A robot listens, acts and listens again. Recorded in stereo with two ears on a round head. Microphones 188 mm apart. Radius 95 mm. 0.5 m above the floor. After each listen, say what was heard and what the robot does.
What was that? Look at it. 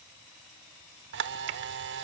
The camera shutter: about 55° right or 125° right. Turn 55° right.
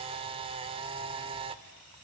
So it is at 30° right. Turn 30° right.
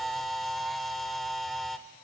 Found it: a camera shutter, straight ahead, 1 to 2 m away.